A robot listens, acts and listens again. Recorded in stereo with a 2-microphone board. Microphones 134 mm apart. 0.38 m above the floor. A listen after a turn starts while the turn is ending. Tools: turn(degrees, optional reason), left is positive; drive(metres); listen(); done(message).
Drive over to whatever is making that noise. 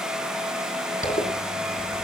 turn(degrees=90)
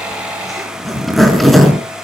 drive(metres=1.0)
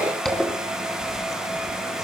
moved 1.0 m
drive(metres=1.0)
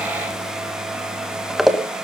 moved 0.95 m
drive(metres=1.0)
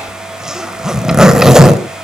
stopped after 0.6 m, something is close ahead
done("I am next to the zipper.")